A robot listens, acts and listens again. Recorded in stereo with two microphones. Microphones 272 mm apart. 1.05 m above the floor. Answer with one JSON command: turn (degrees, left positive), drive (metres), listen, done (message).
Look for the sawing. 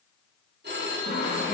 {"turn": 45}
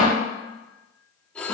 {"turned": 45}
{"done": "Found it: sawing, straight ahead, 2 to 4 m away."}